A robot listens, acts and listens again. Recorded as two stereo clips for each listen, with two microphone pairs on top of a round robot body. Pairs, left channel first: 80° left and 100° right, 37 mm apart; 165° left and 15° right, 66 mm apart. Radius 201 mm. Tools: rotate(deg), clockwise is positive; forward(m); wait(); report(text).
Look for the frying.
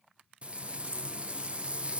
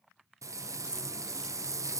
rotate(45)
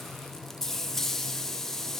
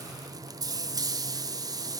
report("Facing the frying, 1 to 2 m away.")